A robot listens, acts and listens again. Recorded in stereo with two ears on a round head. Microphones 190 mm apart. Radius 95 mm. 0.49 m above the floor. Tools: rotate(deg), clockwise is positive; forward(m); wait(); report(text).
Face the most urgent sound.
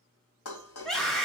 rotate(-30)
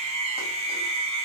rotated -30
rotate(30)
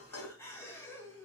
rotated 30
rotate(-10)
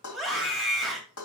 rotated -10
report("Facing the scream, 2 to 4 m away.")